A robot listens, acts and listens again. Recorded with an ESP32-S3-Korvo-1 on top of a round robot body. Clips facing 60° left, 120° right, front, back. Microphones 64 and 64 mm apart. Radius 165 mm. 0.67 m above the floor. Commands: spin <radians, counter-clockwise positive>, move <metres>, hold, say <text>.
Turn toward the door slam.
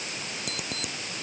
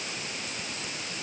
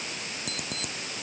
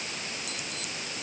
hold
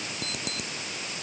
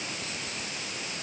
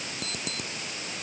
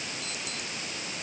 hold
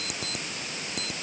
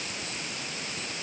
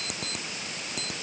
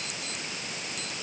say I can't make out a door slam, only an alarm clock.